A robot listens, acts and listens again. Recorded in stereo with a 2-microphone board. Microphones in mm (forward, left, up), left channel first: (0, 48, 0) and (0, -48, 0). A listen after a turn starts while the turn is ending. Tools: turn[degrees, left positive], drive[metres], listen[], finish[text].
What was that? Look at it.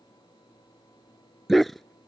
Action: turn[30]
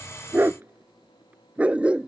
Action: turn[-30]
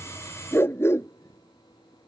Thought: So it is at 25° left.
Action: turn[25]
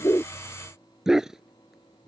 Action: finish[Found it: a dog barking, straight ahead.]